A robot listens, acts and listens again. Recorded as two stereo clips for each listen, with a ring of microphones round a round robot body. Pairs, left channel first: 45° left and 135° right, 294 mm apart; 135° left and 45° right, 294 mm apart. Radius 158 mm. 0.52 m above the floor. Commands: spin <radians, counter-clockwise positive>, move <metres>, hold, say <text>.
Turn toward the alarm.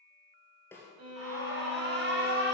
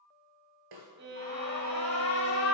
spin -3.05
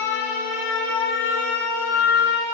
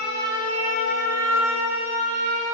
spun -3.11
say Found it: an alarm, straight ahead.